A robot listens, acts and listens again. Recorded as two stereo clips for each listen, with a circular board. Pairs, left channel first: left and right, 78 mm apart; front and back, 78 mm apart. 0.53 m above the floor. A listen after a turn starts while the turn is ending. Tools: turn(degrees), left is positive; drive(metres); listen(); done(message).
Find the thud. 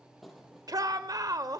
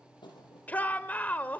done("Facing the thud.")